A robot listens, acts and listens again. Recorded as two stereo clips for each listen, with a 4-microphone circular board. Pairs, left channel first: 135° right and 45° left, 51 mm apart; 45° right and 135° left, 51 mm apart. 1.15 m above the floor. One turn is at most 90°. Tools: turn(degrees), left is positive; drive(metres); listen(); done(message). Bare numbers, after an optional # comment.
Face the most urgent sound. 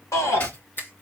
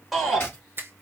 # The shout: 135° right.
turn(-90)
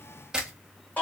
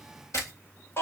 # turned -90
# The shout is now 85° right.
turn(-85)
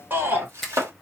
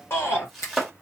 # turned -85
done("Facing the shout, 2 to 4 m away.")